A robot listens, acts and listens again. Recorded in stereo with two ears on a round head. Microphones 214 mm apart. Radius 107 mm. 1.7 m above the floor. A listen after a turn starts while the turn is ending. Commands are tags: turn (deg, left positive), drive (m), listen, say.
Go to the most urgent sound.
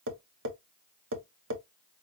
<listen/>
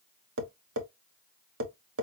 <listen/>
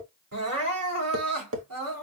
<turn deg="-70"/>
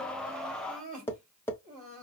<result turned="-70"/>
<turn deg="-35"/>
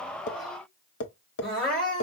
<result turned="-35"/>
<drive m="1.0"/>
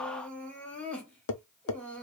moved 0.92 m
<drive m="1.0"/>
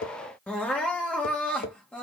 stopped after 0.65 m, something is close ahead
<say>Arrived at the crying, straight ahead.</say>